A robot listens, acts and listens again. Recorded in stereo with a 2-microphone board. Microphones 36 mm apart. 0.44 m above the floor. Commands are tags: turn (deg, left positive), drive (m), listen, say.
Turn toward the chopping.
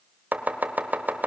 <turn deg="-55"/>
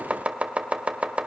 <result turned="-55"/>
<turn deg="-50"/>
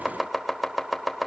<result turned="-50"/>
<say>Facing the chopping, 1 to 2 m away.</say>